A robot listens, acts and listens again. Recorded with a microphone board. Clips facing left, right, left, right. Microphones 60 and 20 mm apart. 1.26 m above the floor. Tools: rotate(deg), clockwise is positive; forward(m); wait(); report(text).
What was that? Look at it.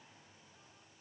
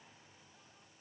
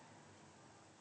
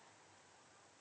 wait()
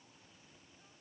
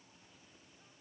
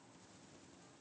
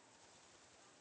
wait()
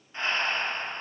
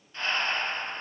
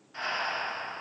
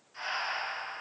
rotate(-25)
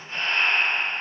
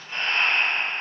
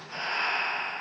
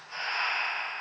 report("Facing the breathing.")